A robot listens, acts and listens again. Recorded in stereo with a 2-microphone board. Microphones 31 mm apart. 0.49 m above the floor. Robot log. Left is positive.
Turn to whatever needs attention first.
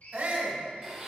note: The shout: about 55° right or 125° right.
cmd yaw -55
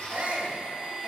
note: So it is at 55° right.
cmd yaw -55
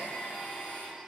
cmd idle
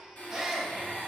end: Found it: a shout, straight ahead.